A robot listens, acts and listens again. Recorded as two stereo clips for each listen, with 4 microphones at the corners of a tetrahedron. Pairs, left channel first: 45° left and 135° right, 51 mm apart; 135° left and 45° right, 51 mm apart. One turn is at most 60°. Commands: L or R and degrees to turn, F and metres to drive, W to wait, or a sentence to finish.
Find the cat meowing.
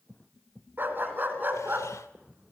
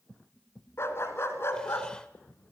W
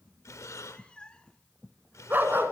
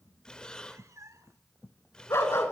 R25
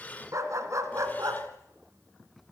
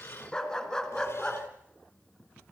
W
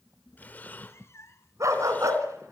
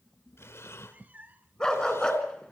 L15
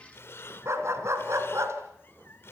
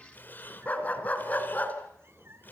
Facing the cat meowing, under 1 m away.